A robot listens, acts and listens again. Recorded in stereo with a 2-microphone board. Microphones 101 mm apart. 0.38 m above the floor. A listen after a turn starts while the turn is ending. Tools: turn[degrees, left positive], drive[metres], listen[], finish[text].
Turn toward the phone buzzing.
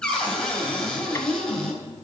Action: listen[]
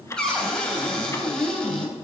Action: listen[]
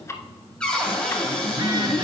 Thought: The phone buzzing: about 45° right or 135° right.
Action: turn[-45]
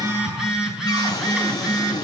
Action: finish[Found it: a phone buzzing, straight ahead.]